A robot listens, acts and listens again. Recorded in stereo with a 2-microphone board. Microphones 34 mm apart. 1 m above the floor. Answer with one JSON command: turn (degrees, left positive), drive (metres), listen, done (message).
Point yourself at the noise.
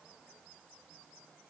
{"listen": true}
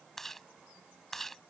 {"turn": 30}
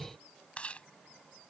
{"turn": 145}
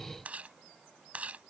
{"turn": -40}
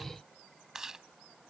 {"turn": -10}
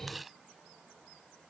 {"done": "Facing the chewing."}